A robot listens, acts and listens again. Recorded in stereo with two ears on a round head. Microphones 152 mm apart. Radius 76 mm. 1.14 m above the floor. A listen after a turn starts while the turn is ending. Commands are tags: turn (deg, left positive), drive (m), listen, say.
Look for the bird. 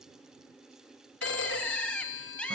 <turn deg="30"/>
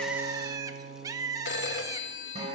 <turn deg="-20"/>
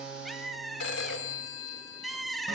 <say>Facing the bird.</say>